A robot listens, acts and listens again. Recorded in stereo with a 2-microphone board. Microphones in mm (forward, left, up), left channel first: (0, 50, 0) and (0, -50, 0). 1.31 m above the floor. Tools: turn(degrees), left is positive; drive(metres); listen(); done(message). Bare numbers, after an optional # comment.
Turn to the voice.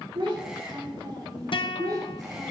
# The child speaking: about 40° right or 140° right.
turn(-40)
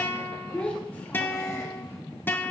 # So it is at 15° left.
turn(15)
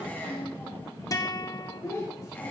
# The child speaking is now 30° left.
turn(30)
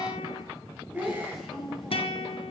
done("Found it: a child speaking, straight ahead, 2 to 4 m away.")